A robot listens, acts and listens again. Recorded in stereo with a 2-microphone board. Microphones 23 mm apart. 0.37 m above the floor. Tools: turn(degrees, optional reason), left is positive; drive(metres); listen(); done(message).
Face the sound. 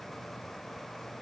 listen()
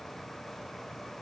listen()
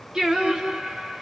turn(degrees=-40, reason="The singing: about 40° right or 140° right.")
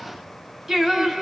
turn(degrees=-15, reason="So it is at 15° right.")
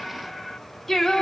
turn(degrees=20, reason="The singing is now 20° left.")
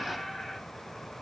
listen()
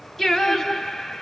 turn(degrees=15, reason="The singing is now 15° left.")
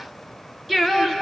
done("Facing the singing, 1 to 2 m away.")